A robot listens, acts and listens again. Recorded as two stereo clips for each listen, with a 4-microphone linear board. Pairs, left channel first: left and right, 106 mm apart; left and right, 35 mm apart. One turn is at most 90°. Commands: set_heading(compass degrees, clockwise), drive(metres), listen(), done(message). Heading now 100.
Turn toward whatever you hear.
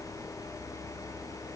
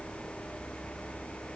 listen()
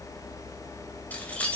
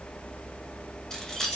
set_heading(70)
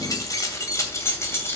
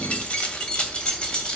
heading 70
set_heading(45)
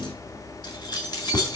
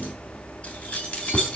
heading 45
set_heading(315)
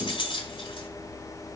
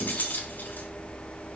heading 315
set_heading(265)
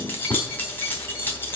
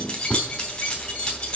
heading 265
set_heading(245)
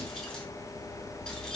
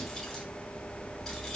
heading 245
listen()
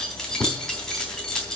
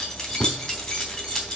done("Found it: keys jangling, straight ahead.")